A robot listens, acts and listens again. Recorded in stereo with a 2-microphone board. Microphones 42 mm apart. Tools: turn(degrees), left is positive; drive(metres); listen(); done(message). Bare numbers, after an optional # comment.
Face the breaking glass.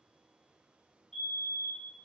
listen()
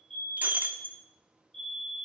# The breaking glass: about 40° right or 140° right.
turn(-40)
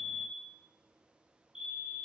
listen()
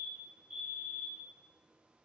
done("I heard breaking glass, but can't make it out now. It was about straight ahead or 100° right.")